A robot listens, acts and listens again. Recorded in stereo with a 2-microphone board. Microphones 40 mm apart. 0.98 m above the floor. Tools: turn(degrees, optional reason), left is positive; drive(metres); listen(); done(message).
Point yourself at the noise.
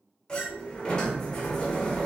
turn(degrees=20, reason="The sliding door: about 20° left or 160° left.")
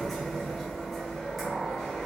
done("Found it: a sliding door, straight ahead, 1 to 2 m away.")